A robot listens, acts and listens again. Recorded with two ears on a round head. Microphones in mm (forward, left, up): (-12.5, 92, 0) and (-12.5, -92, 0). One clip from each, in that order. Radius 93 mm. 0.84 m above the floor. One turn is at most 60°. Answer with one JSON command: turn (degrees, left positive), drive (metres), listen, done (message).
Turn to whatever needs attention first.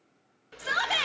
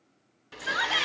{"turn": 55}
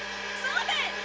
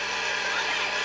{"turn": 55}
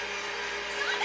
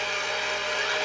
{"listen": true}
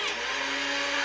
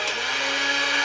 {"listen": true}
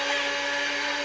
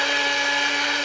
{"done": "I heard a shout from this way, but can't make it out now."}